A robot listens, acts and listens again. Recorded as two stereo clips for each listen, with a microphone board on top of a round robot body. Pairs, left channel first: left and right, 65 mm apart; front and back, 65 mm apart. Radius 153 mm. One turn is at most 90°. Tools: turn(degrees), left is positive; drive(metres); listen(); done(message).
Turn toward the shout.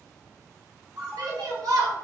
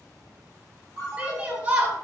turn(degrees=-90)
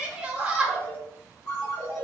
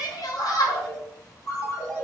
turn(degrees=-15)
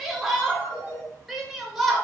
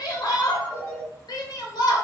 done("Found it: a shout, straight ahead, 1 to 2 m away.")